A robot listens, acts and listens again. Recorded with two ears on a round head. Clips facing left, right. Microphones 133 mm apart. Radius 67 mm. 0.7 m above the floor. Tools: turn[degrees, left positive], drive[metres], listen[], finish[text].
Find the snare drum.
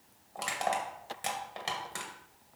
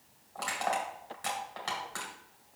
Action: listen[]
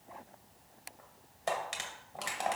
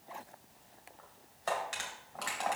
Action: listen[]
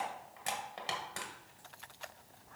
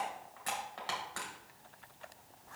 Action: finish[I can't make out a snare drum to turn to.]